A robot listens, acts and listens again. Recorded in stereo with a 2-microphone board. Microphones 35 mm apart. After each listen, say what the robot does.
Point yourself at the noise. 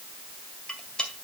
Turn 30° left.
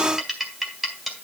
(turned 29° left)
Facing the cutlery clinking.